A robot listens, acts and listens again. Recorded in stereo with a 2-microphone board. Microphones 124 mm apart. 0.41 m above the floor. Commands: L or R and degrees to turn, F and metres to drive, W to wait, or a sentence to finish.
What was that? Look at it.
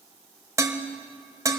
R25
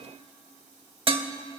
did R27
R125
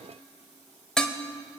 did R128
Found it: dishes clattering, straight ahead, 1 to 2 m away.